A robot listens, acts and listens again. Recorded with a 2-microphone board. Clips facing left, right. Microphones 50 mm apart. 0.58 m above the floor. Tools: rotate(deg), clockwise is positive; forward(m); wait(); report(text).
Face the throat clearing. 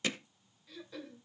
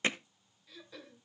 rotate(-30)
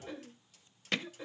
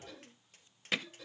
rotate(-155)
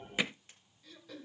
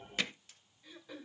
rotate(15)
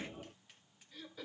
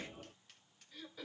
report("Found it: throat clearing, straight ahead, 1 to 2 m away.")